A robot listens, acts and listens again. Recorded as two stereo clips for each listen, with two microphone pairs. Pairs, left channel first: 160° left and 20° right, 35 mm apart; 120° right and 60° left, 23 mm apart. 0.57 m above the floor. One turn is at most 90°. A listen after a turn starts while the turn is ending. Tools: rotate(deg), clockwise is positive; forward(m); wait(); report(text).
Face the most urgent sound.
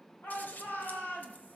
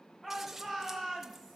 rotate(-90)
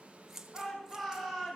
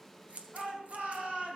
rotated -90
rotate(-80)
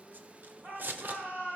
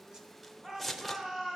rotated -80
report("Facing the shout, over 4 m away.")